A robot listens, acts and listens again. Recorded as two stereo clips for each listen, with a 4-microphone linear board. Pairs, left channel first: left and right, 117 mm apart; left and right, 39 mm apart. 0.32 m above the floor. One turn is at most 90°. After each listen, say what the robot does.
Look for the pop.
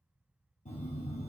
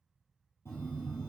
Keep listening.
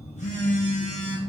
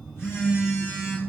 Keep listening.
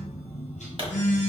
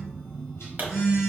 Turn 45° right.
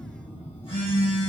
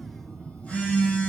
Keep listening.
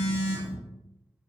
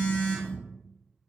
I heard a pop, but can't make it out now. It was about straight ahead or 90° right.